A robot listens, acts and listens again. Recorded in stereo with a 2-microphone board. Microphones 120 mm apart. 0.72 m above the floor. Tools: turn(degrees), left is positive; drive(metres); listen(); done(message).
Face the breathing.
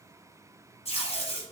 listen()
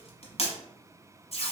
listen()
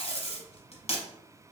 done("I can't make out breathing, only tape being pulled.")